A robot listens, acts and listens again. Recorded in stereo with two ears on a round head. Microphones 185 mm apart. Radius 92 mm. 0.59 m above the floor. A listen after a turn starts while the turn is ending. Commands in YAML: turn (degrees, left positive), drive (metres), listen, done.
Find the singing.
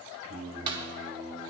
turn: -70
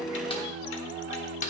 turn: -25
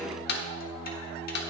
turn: -10
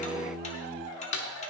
done: "Found it: singing, straight ahead, 2 to 4 m away."